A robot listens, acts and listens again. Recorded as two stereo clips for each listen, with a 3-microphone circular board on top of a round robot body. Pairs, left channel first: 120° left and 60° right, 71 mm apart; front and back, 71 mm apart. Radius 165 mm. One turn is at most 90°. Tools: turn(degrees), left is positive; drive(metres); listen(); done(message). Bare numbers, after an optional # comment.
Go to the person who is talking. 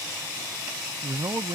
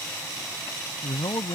# The man speaking: 25° right.
turn(-25)
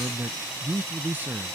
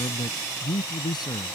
drive(1.0)
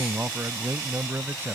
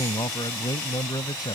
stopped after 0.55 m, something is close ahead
done("Blocked. The man speaking is further on, straight ahead.")